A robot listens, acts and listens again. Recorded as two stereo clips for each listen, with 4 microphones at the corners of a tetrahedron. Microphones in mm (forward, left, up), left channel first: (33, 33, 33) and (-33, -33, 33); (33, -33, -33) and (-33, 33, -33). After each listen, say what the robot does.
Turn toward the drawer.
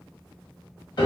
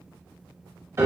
Keep listening.
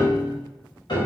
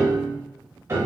Keep listening.
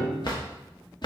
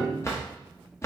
Turn 15° left.
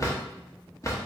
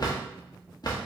Facing the drawer, under 1 m away.